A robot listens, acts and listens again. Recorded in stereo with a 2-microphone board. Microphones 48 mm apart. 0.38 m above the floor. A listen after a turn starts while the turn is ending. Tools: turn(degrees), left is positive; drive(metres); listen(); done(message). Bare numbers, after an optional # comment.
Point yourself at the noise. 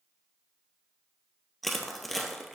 turn(30)
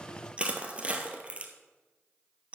# So it is at 30° right.
turn(-30)
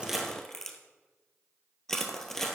done("Facing the crushing, 1 to 2 m away.")